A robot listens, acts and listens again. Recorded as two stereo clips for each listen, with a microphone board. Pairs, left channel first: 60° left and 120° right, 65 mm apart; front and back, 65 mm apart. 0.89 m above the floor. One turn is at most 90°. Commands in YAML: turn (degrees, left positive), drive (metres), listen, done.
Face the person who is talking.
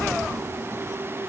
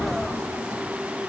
listen: true
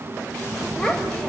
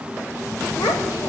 turn: -15
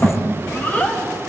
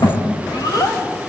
done: "Found it: a child speaking, straight ahead, over 4 m away."